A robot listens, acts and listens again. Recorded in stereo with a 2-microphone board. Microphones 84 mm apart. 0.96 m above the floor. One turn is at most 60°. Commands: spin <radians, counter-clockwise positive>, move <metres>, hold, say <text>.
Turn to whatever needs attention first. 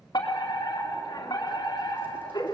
spin 0.87
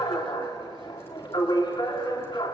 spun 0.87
spin 1.05
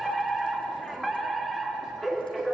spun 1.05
say Found it: a fire alarm, straight ahead, 2 to 4 m away.